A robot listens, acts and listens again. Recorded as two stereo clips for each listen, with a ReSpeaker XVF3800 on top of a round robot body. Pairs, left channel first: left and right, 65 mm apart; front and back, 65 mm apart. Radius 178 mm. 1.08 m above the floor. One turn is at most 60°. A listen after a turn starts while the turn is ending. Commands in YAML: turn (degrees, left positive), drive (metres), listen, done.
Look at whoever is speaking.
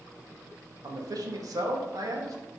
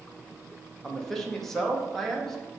turn: -60
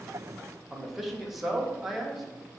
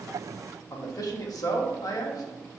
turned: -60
done: "Facing the man speaking, 1 to 2 m away."